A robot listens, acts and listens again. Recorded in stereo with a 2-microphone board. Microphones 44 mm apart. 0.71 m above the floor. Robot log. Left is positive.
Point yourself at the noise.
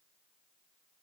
cmd idle
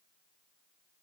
cmd idle
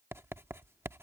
note: The writing: about 70° right or 110° right.
cmd yaw -70
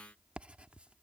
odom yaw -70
note: So it is at 25° right.
cmd yaw -25
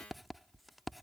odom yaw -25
end: Found it: writing, straight ahead.